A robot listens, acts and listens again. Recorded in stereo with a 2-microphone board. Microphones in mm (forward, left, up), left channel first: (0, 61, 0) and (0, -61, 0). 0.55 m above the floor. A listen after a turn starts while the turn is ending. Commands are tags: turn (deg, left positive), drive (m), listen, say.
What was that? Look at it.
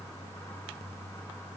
<listen/>
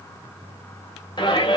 <turn deg="40"/>
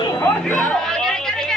<say>Found it: a shout, straight ahead.</say>